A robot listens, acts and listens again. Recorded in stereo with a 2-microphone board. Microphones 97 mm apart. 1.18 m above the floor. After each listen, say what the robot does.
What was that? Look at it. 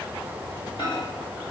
Turn 55° left.
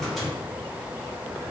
Facing the microwave.